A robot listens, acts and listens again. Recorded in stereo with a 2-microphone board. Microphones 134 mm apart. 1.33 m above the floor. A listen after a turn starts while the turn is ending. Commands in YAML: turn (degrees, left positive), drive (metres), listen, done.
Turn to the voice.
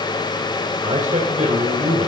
turn: -65
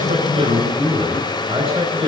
turn: -50
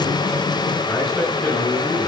done: "Facing the man speaking."